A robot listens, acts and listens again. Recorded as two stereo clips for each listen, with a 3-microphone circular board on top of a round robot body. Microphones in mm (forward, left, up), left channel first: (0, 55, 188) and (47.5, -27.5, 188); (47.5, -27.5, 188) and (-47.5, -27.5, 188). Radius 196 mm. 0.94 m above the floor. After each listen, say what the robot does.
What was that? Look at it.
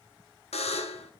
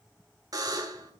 Turn 125° left.
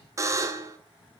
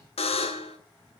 Found it: a buzzer, straight ahead.